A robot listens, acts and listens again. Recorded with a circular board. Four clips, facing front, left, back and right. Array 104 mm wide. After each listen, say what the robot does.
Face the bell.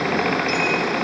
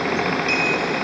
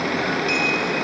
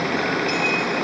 Keep listening.
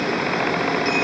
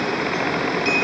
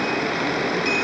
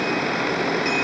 Keep listening.
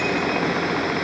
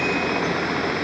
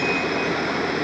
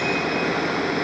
I can't make out a bell.